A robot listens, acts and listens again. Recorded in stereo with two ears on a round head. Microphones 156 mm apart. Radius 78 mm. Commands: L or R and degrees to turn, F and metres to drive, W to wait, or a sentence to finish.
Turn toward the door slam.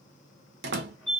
R60
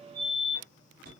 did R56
W
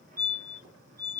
I heard a door slam, but can't make it out now. It was about 5° right or 65° right.